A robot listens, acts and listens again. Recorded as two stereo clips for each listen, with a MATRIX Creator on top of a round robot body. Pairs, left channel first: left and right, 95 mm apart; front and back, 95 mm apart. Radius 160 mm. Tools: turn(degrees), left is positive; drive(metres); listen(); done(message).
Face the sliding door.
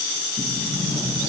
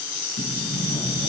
turn(degrees=-15)
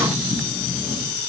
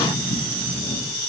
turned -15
done("Found it: a sliding door, straight ahead.")